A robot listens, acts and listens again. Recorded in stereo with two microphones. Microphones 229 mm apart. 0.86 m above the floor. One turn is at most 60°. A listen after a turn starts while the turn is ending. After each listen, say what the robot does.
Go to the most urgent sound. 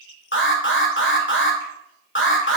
Turn 55° left.
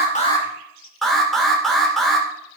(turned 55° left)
Drive 1.0 m forward.
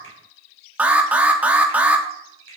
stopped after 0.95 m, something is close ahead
I am next to the alarm.